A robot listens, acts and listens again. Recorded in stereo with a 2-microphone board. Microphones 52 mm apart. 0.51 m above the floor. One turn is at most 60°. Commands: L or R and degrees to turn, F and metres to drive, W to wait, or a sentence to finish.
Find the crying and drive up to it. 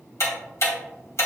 W
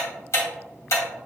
W
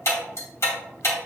I can't make out crying, only ticking.